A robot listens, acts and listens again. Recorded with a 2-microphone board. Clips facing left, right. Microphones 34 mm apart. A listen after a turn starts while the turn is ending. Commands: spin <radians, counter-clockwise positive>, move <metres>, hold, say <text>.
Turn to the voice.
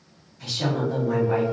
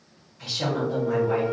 spin -0.26
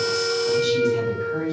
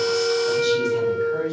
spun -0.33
hold
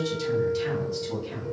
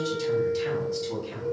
say Facing the woman speaking, 1 to 2 m away.